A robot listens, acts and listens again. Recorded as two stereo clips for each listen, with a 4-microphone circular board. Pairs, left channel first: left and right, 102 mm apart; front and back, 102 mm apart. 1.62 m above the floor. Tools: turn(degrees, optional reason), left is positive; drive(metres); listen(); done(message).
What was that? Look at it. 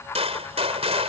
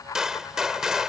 turn(degrees=-95, reason="The gunshot: 95° right.")
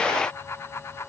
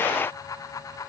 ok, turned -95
done("Facing where the gunshot came from. I can't hear it now.")